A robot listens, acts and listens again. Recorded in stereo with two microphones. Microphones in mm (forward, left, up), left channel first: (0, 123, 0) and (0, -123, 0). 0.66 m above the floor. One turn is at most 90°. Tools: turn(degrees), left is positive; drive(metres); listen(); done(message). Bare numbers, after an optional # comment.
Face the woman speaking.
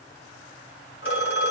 listen()
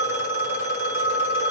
listen()
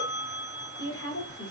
# The woman speaking: about 70° left or 110° left.
turn(70)
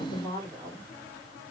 # So it is at 10° left.
turn(10)
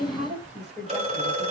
done("Facing the woman speaking, 2 to 4 m away.")